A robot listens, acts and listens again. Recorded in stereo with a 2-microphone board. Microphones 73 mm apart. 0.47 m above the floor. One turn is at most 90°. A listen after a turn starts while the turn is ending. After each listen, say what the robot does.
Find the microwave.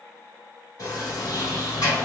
Keep listening.
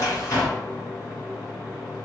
Keep listening.
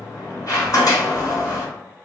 I can't make out a microwave, only a sliding door.